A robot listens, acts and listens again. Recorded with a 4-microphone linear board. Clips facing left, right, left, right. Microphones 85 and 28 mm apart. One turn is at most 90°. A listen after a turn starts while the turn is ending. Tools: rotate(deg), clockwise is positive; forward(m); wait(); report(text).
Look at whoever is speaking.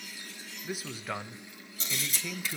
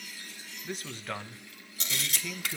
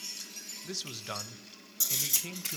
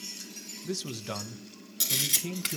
rotate(-30)
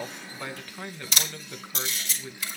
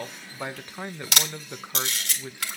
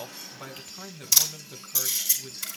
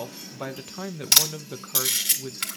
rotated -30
rotate(25)
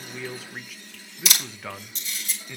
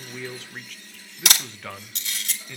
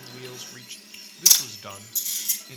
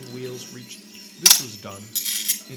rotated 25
report("Found it: a man speaking, straight ahead, under 1 m away.")